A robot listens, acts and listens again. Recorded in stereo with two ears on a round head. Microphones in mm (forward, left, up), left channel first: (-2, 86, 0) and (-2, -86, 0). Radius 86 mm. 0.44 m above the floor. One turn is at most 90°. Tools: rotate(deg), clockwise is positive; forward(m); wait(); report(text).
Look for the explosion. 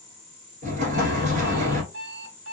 rotate(40)
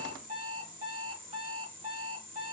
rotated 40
wait()
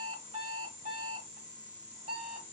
report("I heard an explosion, but can't make it out now. It was about straight ahead or 100° right.")